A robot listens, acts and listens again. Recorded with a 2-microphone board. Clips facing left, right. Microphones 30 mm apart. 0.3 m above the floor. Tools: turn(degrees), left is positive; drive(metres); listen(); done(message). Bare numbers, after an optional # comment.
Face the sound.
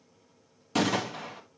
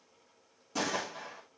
turn(90)
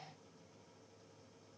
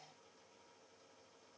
done("Facing where the gunshot came from. I can't hear it now.")